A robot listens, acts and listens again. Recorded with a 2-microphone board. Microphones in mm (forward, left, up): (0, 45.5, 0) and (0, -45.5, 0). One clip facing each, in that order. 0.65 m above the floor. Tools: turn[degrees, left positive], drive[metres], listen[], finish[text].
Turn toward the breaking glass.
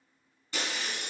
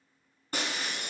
Thought: The breaking glass: about 45° right or 135° right.
Action: turn[-45]
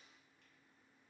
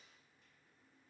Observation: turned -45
Action: listen[]
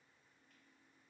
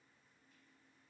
Action: finish[I heard breaking glass, but can't make it out now. It was about straight ahead or 90° right.]